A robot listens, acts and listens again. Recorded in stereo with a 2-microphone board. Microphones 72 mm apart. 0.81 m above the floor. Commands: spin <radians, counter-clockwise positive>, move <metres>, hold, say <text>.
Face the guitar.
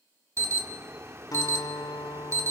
spin 1.05
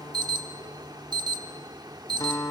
spin 1.05
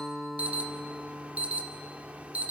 say Facing the guitar.